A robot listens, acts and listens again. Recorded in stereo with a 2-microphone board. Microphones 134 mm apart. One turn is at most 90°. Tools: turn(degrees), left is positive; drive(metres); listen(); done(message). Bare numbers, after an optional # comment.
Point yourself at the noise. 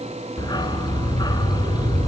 # The dog barking: about 30° left or 150° left.
turn(30)
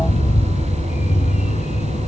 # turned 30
# So it is at 120° left.
turn(90)
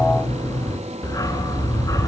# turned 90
# The dog barking is now 25° left.
turn(25)
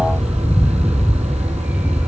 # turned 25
# The dog barking is now 10° right.
turn(-10)
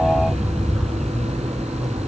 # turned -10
done("Facing the dog barking, 1 to 2 m away.")